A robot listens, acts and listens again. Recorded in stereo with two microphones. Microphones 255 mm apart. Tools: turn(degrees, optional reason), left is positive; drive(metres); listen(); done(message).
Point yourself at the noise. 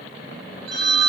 turn(degrees=-45, reason="The phone ringing: about 45° right or 135° right.")
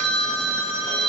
turn(degrees=-85, reason="So it is at 85° right.")
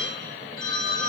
turn(degrees=15, reason="The phone ringing is now 15° left.")
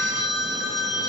done("Facing the phone ringing, 2 to 4 m away.")